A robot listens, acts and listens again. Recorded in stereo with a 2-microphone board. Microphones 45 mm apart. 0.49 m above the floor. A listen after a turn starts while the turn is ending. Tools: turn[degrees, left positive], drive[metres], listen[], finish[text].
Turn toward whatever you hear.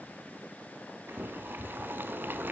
Thought: The boiling: about 55° right or 125° right.
Action: turn[-55]
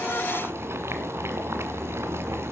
Thought: So it is at 70° right.
Action: turn[-70]
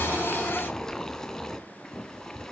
Thought: The boiling is now 15° left.
Action: turn[15]
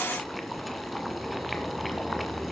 Action: finish[Found it: boiling, straight ahead, 2 to 4 m away.]